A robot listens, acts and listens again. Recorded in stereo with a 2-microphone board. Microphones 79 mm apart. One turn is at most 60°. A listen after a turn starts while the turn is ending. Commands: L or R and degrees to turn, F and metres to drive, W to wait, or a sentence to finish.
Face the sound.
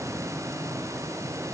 W
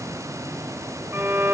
R30
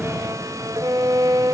R60
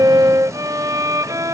R60
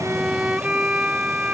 R15
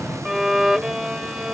Found it: a violin, straight ahead.